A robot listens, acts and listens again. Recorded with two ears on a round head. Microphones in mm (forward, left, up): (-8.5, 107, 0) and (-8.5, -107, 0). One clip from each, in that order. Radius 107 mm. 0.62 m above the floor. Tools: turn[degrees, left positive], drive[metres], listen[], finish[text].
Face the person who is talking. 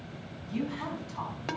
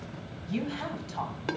Thought: The woman speaking: about 65° right or 115° right.
Action: turn[-65]
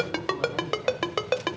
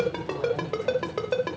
Action: listen[]
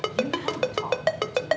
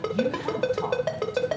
Action: listen[]
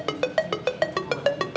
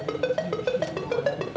Action: finish[I heard a woman speaking, but can't make it out now. It was about straight ahead or 50° right.]